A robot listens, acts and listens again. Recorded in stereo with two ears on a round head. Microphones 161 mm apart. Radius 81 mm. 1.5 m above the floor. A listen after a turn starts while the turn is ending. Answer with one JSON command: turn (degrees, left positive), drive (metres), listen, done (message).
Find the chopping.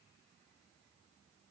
{"listen": true}
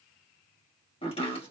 {"turn": 30}
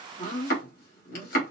{"turn": 115}
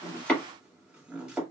{"done": "Found it: chopping, straight ahead, 1 to 2 m away."}